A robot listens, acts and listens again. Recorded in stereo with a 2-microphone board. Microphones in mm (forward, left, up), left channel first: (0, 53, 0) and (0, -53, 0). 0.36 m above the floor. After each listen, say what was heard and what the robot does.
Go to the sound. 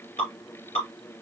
The dripping: about 70° left or 110° left. Turn 70° left.
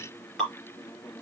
Drive 1.0 m forward.
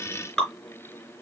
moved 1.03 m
Drive 1.0 m forward.
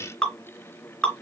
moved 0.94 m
The dripping is now 10° left. Turn 10° left.
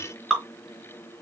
Drive 1.0 m forward.
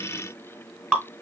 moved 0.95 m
The dripping is now 10° right. Turn 10° right.
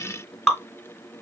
Drive 1.0 m forward.
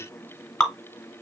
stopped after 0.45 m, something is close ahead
I am next to the dripping.